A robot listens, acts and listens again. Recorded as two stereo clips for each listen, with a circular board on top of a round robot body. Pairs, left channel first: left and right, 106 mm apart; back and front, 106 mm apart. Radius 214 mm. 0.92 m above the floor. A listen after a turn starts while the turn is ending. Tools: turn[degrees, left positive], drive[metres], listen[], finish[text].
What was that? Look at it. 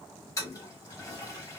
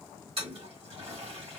Thought: The toilet flushing: 30° left.
Action: turn[30]
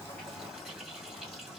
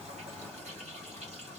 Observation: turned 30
Action: finish[Found it: a toilet flushing, straight ahead.]